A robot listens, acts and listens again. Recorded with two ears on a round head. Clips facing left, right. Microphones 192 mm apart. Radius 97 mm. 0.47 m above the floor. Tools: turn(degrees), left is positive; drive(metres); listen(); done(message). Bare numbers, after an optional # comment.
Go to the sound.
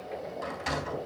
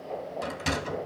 # The sliding door: about 45° right or 135° right.
turn(-45)
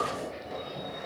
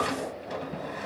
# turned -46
# So it is at 90° right.
turn(-90)
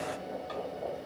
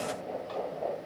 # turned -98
# Nothing new. It was at 10° left.
turn(10)
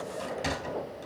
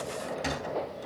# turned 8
drive(1.0)
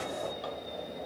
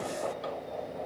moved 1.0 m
listen()
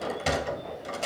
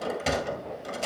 drive(1.0)
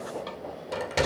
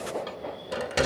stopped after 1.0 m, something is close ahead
# The sliding door is now 10° right.
turn(-10)
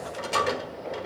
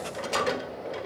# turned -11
done("Arrived at the sliding door, straight ahead.")